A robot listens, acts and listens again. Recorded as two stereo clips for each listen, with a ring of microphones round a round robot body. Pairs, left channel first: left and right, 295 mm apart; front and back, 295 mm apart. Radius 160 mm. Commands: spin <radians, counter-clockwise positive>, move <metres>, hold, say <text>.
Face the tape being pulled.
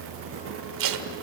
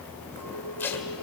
spin -1.48
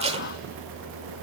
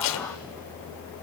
spin -0.35
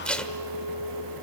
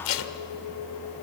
say Found it: tape being pulled, straight ahead, 1 to 2 m away.